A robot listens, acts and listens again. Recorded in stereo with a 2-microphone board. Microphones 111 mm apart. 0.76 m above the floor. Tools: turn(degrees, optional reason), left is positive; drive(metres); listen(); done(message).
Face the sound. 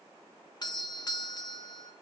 turn(degrees=40, reason="The doorbell: about 40° left or 140° left.")
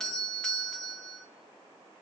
done("Found it: a doorbell, straight ahead.")